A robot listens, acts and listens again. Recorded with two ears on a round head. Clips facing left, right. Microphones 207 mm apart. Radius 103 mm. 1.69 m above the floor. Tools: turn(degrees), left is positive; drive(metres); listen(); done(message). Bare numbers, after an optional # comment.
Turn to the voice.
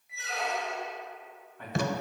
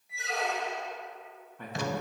turn(-90)
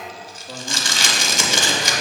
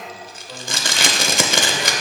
# So it is at 30° left.
turn(30)
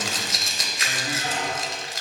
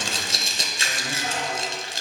listen()
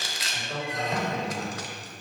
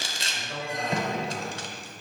# The man speaking is now 25° left.
turn(25)
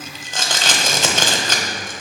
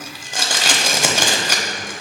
# The man speaking is now 10° left.
turn(10)
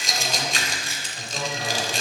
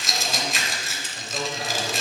done("Facing the man speaking, 2 to 4 m away.")